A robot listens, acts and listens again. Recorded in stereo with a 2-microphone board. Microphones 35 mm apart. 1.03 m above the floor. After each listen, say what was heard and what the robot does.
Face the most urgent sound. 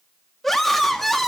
Turn 30° left.
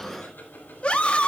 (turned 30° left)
So it is at 145° left. Turn 145° left.
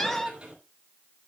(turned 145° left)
The scream is now 10° left. Turn 10° left.
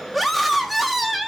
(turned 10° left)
Found it: a scream, straight ahead, 1 to 2 m away.